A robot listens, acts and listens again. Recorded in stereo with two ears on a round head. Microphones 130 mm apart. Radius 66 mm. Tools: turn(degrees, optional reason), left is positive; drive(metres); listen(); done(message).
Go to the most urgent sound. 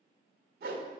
listen()
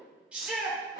turn(degrees=-30)
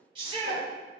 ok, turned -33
turn(degrees=-140, reason="So it is at 140° right.")
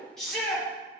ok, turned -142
drive(metres=1.0)
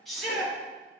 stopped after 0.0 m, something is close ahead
done("Something is in my way. I am facing the shout but have not reached it.")